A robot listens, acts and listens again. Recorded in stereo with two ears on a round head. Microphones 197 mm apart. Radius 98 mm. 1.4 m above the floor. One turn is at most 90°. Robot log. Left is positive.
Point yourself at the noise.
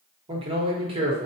note: The man speaking: about 25° right or 155° right.
cmd yaw -25
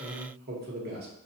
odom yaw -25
note: So it is at 130° right.
cmd yaw -90
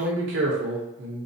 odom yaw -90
note: The man speaking is now 60° right.
cmd yaw -60
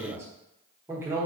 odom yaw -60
note: The man speaking is now 10° right.
cmd yaw -10
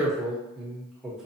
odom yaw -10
end: Found it: a man speaking, straight ahead, 1 to 2 m away.